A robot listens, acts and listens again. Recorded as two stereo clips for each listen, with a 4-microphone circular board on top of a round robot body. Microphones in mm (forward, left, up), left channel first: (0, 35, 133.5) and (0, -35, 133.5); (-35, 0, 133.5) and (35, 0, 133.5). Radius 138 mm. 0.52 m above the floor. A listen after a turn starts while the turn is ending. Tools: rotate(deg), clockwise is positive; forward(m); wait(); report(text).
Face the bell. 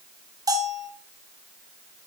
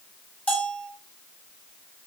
rotate(115)
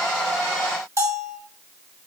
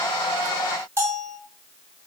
rotate(50)
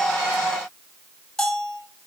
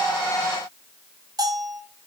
report("Found it: a bell, straight ahead, 2 to 4 m away.")